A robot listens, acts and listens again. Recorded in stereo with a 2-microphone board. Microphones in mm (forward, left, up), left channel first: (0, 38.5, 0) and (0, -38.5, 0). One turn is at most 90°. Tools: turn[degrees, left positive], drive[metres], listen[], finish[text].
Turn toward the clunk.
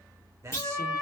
Thought: The clunk: about 35° left or 145° left.
Action: turn[35]
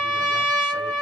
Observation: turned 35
Action: listen[]
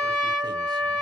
Action: finish[I heard a clunk, but can't make it out now. It was about straight ahead or 110° left.]